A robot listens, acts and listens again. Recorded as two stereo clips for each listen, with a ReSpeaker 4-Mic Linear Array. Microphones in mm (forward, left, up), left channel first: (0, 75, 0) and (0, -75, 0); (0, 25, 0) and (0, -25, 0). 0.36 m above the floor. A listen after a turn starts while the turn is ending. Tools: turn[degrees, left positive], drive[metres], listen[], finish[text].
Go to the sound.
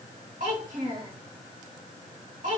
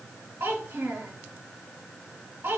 Thought: The child speaking: about 60° right or 120° right.
Action: turn[-60]
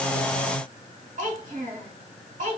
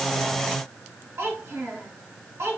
Thought: So it is at 55° right.
Action: turn[-55]
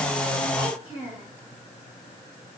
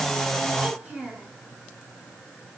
Thought: The child speaking is now 15° right.
Action: turn[-15]
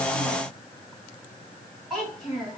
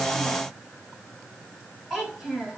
Action: drive[1.0]
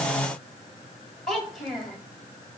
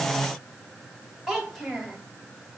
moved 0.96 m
Action: drive[1.0]
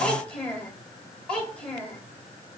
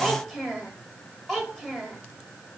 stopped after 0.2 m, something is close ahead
Action: finish[Arrived at the child speaking, straight ahead.]